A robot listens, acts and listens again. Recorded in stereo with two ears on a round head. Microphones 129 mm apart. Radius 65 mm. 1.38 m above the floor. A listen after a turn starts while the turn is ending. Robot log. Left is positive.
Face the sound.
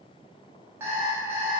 note: The alarm clock: about 20° right or 160° right.
cmd yaw -20
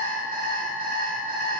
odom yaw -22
note: So it is at 140° right.
cmd yaw -140
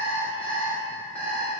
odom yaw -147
note: The alarm clock is now 10° left.
cmd yaw +10
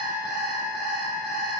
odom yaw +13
end: Found it: an alarm clock, straight ahead.